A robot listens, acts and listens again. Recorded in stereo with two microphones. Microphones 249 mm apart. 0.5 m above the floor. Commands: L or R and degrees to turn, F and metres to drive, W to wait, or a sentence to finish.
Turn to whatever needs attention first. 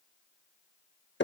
W
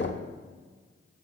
W
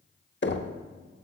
I can't make out anything urgent, only knocking.